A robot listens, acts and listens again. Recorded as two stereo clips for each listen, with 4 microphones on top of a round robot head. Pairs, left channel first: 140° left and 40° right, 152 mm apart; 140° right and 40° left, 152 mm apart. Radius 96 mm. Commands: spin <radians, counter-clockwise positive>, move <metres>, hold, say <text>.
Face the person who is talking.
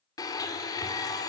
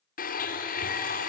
hold
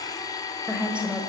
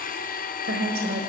spin 0.79
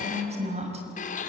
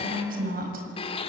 spin 0.17
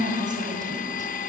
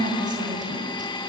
say Facing the woman speaking, over 4 m away.